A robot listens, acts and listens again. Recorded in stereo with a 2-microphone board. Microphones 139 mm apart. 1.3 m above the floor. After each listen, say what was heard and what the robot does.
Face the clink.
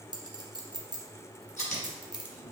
The clink: about 30° right or 150° right. Turn 30° right.
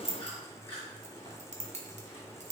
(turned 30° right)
So it is at 115° right. Turn 115° right.
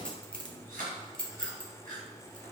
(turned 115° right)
Facing the clink.